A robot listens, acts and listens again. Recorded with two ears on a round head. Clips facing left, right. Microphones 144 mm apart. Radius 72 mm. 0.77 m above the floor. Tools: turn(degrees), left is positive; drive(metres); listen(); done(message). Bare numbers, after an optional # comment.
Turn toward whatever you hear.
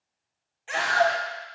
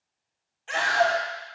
turn(30)
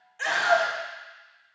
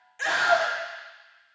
# So it is at 20° right.
turn(-20)
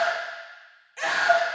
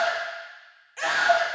done("Facing the scream, 1 to 2 m away.")